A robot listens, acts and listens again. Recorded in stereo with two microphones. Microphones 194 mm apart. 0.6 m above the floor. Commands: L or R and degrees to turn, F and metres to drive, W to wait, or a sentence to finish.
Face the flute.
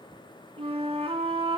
R30
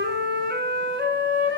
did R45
R105
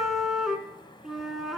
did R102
Facing the flute.